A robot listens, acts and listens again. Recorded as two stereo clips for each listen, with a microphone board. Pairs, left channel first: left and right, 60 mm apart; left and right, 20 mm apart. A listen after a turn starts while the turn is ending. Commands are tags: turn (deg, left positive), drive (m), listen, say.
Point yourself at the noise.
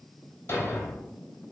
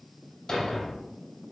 <turn deg="35"/>
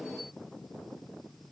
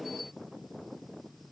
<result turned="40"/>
<listen/>
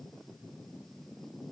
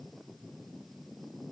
<say>I heard a thud, but can't make it out now. It was about 5° right or 105° left.</say>